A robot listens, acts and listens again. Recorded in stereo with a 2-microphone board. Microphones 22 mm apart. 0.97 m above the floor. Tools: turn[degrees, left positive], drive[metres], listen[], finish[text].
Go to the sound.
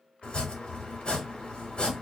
Thought: The chopping: about 55° left or 125° left.
Action: turn[55]
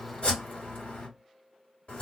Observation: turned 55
Thought: So it is at 65° left.
Action: turn[65]
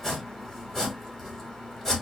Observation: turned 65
Thought: The chopping is now 15° left.
Action: turn[15]
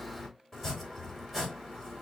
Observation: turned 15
Thought: The chopping is now 10° left.
Action: turn[10]
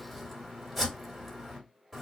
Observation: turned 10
Action: drive[1.0]
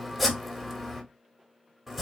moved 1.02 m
Action: drive[1.0]
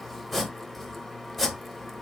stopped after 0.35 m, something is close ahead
Action: finish[I am next to the chopping.]